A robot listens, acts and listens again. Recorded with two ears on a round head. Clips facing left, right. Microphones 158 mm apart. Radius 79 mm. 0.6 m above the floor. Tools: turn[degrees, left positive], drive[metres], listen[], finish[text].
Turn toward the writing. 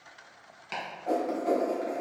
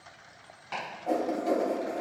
Action: turn[-30]
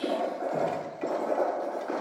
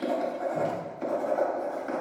Thought: So it is at 145° right.
Action: turn[-145]
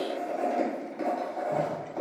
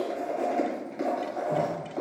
Thought: The writing is now 10° right.
Action: turn[-10]
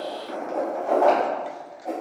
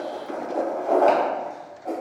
Action: finish[Found it: writing, straight ahead.]